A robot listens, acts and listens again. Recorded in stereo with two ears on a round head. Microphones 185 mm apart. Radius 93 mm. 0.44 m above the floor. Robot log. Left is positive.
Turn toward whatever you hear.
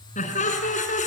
note: The laughter: about 35° left or 145° left.
cmd yaw +35
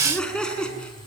end: Found it: laughter, straight ahead.